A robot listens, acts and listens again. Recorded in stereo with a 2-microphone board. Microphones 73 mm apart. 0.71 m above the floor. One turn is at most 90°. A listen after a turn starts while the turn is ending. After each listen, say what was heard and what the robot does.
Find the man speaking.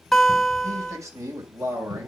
The man speaking: about 45° right or 135° right. Turn 45° right.
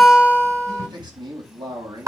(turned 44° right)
So it is at 100° right. Turn 90° right.
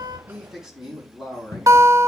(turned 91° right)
The man speaking is now 10° right. Turn 10° right.
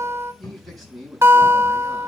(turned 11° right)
Found it: a man speaking, straight ahead, over 4 m away.